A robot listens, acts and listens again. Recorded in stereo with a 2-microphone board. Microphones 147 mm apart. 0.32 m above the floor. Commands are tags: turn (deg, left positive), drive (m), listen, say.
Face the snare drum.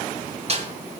<turn deg="-45"/>
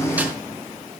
<turn deg="-15"/>
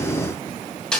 <say>Found it: a snare drum, straight ahead.</say>